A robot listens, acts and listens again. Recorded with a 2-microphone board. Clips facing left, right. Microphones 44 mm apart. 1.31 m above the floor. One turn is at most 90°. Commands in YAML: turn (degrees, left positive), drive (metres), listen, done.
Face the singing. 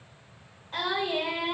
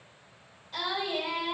turn: 40
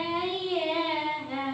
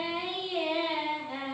turn: 90
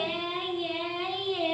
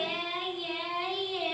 turn: 35
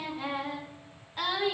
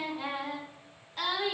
turn: 15
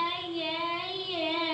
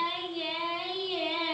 done: "Found it: singing, straight ahead."